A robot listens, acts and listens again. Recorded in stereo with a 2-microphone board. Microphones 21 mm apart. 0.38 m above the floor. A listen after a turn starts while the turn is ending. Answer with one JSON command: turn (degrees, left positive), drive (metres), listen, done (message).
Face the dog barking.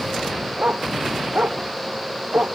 {"turn": -70}
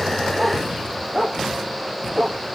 {"done": "Found it: a dog barking, straight ahead."}